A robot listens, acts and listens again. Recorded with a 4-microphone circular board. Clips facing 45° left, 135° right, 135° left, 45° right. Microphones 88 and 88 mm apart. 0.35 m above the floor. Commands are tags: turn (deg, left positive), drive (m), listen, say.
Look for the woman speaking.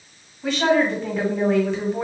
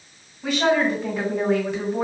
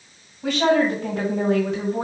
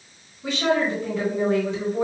<turn deg="145"/>
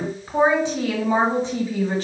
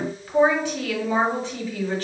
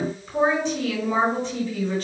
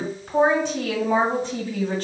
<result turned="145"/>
<turn deg="-15"/>
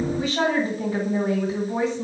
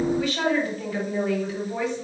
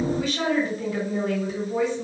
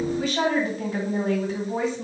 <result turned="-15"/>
<say>Found it: a woman speaking, straight ahead.</say>